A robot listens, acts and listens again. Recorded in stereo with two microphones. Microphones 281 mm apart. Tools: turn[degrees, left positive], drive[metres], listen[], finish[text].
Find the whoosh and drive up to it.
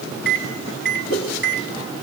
Action: turn[90]
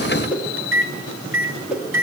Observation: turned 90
Action: drive[1.0]
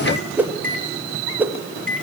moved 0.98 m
Action: drive[1.0]
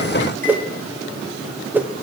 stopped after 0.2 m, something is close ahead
Action: finish[I am next to the whoosh.]